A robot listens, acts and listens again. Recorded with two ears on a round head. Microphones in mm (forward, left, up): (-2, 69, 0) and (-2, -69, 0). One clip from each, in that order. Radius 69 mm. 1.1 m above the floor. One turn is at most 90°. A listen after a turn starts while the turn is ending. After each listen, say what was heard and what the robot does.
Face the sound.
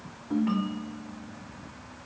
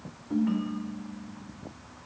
The ringtone: about 25° left or 155° left. Turn 25° left.
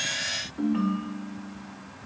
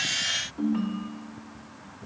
Found it: a ringtone, straight ahead.